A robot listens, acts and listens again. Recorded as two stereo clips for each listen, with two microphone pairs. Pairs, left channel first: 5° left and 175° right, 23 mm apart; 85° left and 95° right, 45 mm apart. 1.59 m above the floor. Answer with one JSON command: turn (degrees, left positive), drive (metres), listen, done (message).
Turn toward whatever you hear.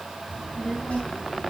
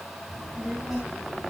{"turn": -10}
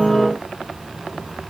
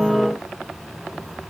{"turn": -10}
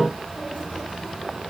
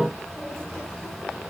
{"done": "Found it: a child speaking, straight ahead, over 4 m away."}